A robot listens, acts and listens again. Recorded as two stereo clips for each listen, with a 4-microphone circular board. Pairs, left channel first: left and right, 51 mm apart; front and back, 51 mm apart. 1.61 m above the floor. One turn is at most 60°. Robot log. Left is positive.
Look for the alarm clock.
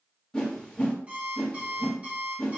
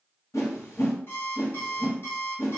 note: The alarm clock: 30° right.
cmd yaw -30
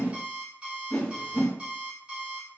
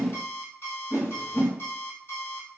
note: The alarm clock is now 25° right.
cmd yaw -25
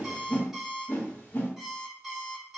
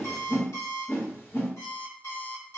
note: The alarm clock is now 10° right.
cmd yaw -10
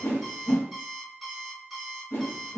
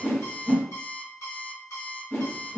end: Facing the alarm clock.